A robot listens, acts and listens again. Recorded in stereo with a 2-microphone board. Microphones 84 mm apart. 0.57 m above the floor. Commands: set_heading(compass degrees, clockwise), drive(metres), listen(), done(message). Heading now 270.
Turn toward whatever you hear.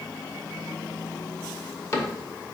set_heading(235)
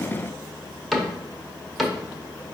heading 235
done("Facing the cupboard door, under 1 m away.")